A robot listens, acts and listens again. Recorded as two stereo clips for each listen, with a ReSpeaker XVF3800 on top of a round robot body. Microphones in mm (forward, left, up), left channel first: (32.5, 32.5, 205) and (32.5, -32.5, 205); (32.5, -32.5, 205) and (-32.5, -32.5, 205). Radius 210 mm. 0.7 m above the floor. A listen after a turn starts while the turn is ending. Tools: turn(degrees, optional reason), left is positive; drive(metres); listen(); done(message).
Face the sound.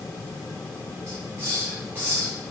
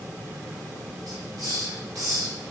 turn(degrees=-145, reason="The hiss: 145° right.")
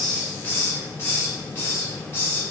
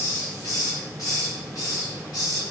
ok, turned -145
turn(degrees=35, reason="The hiss is now 35° left.")
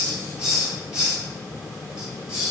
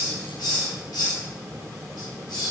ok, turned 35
turn(degrees=-10, reason="The hiss is now 10° right.")
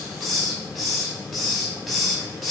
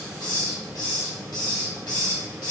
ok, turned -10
done("Found it: a hiss, straight ahead.")